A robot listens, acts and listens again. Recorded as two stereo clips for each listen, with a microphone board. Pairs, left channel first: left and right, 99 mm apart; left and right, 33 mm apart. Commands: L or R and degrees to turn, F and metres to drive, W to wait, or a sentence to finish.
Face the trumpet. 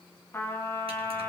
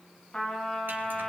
L25
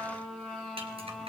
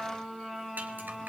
Found it: a trumpet, straight ahead, 2 to 4 m away.